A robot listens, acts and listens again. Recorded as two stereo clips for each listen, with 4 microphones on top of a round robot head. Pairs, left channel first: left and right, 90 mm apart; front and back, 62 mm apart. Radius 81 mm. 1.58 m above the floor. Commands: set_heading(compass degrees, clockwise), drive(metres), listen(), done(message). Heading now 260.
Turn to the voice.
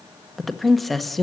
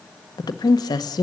done("Found it: a woman speaking, straight ahead.")